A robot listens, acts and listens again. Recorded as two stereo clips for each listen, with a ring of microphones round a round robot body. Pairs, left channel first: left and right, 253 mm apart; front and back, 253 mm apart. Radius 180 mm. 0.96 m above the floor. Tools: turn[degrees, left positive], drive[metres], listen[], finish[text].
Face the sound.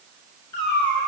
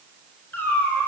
Thought: The cat meowing: 85° left.
Action: turn[85]
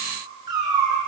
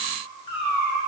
Thought: The cat meowing is now 15° right.
Action: turn[-15]
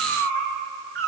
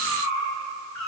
Thought: The cat meowing is now 10° left.
Action: turn[10]
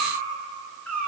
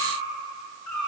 Action: finish[Facing the cat meowing.]